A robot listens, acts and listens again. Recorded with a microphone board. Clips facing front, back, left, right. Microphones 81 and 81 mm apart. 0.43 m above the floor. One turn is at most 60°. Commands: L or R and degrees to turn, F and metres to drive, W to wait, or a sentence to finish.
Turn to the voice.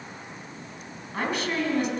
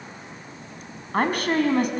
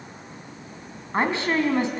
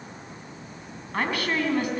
L60
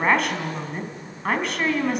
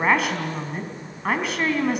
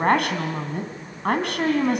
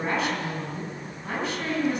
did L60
L60
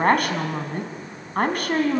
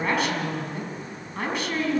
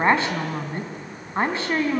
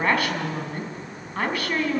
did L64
L30
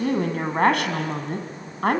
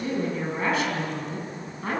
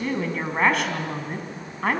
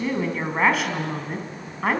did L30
Facing the woman speaking, 2 to 4 m away.